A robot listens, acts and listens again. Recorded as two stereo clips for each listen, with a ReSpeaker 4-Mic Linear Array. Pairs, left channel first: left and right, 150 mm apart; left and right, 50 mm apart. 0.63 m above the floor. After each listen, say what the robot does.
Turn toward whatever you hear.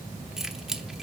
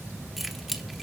Turn 30° left.
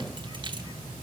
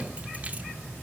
Keep listening.
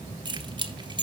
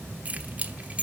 Turn 30° right.
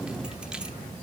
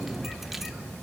Keep listening.
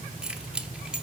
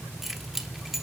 Found it: keys jangling, straight ahead.